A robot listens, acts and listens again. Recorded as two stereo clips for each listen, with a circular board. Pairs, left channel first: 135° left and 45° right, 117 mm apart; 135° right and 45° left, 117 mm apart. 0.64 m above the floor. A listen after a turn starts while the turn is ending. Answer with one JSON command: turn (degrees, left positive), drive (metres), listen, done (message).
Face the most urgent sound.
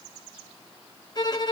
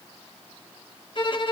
{"listen": true}
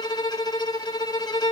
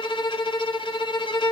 {"listen": true}
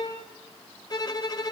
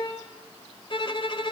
{"done": "I can't make out anything urgent, only a violin."}